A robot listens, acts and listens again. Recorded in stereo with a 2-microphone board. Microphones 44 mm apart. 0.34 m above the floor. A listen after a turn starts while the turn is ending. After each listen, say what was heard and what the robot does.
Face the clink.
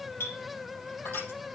The clink: about 75° left or 105° left. Turn 75° left.
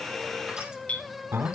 So it is at 30° left. Turn 30° left.
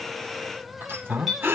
Found it: a clink, straight ahead.